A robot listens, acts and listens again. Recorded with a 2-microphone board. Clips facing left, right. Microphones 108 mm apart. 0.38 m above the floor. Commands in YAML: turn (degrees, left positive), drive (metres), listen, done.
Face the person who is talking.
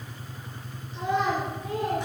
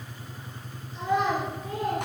turn: 25
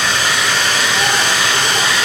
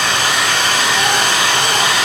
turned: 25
listen: true
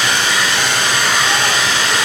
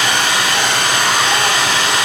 listen: true
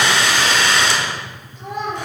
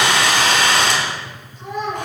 turn: 25
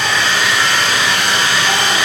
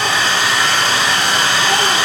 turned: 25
listen: true
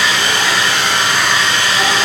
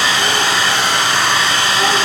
listen: true
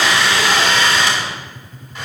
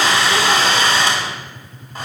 done: "I heard a child speaking, but can't make it out now. It was about straight ahead or 130° left."